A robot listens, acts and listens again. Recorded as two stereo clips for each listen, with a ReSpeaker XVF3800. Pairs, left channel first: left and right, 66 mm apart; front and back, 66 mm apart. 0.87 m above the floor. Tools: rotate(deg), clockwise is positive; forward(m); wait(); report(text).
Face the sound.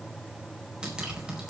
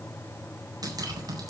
rotate(165)
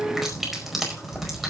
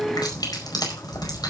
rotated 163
report("Found it: dripping, straight ahead.")